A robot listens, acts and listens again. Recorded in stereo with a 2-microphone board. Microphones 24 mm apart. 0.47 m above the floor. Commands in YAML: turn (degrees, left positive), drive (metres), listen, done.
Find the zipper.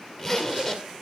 turn: 30
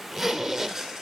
done: "Found it: a zipper, straight ahead."